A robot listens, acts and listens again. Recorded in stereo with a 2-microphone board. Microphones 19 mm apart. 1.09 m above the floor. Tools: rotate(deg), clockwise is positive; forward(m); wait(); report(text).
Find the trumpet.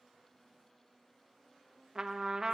rotate(25)
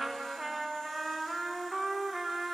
report("Found it: a trumpet, straight ahead, under 1 m away.")